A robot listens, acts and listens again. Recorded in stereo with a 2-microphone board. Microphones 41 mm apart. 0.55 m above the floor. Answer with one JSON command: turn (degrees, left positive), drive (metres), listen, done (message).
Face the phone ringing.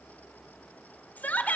{"listen": true}
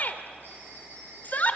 {"turn": -60}
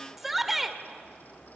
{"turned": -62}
{"listen": true}
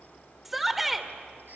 {"listen": true}
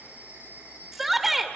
{"turn": -60}
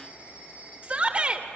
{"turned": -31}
{"turn": -30}
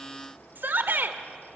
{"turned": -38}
{"listen": true}
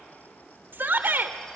{"listen": true}
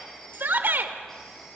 {"done": "Facing where the phone ringing came from. I can't hear it now."}